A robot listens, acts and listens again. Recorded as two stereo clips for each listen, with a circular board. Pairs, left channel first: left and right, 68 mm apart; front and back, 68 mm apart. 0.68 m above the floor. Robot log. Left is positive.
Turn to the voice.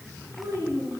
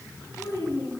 note: The child speaking: 45° right.
cmd yaw -45
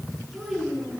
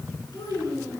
end: Found it: a child speaking, straight ahead.